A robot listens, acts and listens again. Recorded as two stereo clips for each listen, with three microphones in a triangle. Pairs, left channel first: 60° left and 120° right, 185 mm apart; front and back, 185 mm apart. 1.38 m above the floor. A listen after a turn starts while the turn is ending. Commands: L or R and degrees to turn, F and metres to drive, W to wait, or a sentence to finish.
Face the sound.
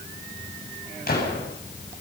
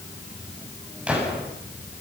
L95
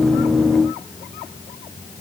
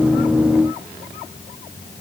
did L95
Facing where the gunshot came from. I can't hear it now.